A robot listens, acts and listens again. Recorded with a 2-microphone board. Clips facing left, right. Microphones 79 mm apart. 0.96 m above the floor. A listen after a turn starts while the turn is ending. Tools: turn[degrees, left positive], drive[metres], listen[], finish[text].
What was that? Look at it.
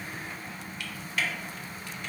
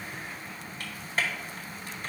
Thought: The typing on a keyboard: about 35° right or 145° right.
Action: turn[-35]
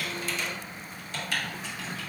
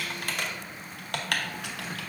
Thought: So it is at 105° right.
Action: turn[-105]
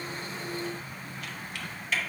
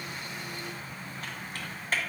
Thought: The typing on a keyboard is now 45° right.
Action: turn[-45]
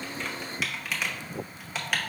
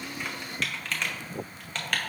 Action: finish[Facing the typing on a keyboard, under 1 m away.]